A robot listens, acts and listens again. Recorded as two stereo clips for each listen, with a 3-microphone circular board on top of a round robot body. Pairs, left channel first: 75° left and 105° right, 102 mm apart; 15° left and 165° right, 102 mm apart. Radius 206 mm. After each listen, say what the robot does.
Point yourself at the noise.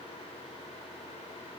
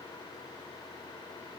Keep listening.
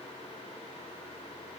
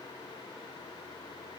Keep listening.
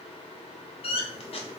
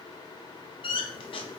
Turn 50° left.
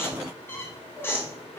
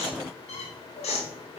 Found it: a squeak, straight ahead.